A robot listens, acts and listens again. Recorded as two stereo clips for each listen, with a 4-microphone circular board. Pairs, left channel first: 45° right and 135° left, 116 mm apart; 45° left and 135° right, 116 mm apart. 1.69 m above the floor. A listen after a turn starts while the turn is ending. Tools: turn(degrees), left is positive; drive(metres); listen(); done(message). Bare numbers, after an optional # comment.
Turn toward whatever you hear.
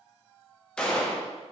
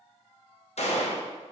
# The gunshot: 35° left.
turn(35)
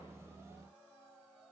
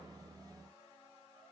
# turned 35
done("Facing where the gunshot came from. I can't hear it now.")